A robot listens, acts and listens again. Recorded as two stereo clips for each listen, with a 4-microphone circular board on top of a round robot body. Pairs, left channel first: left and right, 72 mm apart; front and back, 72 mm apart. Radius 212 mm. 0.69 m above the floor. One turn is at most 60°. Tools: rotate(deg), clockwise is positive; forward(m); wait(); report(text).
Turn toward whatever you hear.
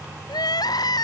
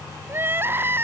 rotate(-60)
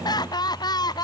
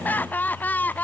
rotate(-60)
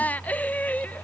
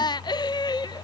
rotate(-20)
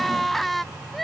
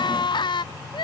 report("Found it: crying, straight ahead.")